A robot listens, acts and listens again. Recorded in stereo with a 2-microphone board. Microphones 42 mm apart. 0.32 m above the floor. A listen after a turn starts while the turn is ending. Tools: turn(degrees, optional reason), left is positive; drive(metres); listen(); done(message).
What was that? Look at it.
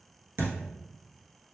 turn(degrees=-65, reason="The thud: about 65° right or 115° right.")
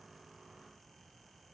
listen()
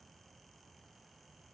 done("I heard a thud, but can't make it out now. It was about straight ahead or 50° right.")